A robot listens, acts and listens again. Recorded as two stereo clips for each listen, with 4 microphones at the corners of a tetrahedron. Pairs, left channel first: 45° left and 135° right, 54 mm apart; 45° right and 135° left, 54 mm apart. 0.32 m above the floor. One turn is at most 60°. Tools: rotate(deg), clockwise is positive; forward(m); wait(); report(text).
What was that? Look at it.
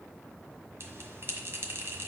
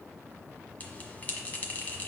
rotate(60)
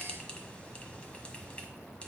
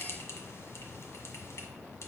rotate(20)
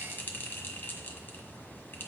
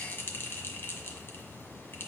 report("Found it: a bell, straight ahead.")